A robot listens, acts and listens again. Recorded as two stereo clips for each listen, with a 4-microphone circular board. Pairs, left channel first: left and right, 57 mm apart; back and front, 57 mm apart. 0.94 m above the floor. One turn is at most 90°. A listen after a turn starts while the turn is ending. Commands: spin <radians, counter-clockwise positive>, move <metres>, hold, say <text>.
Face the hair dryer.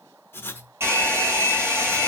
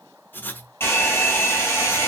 spin -1.57
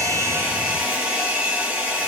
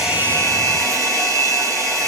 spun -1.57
spin -0.52
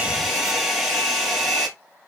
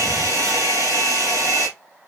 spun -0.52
spin -0.17
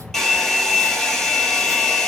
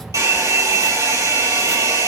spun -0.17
say Found it: a hair dryer, straight ahead, 2 to 4 m away.